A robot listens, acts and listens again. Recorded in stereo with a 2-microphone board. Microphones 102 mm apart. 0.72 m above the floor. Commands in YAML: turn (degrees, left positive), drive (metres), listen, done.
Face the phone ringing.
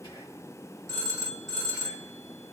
turn: -35
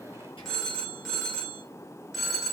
done: "Found it: a phone ringing, straight ahead."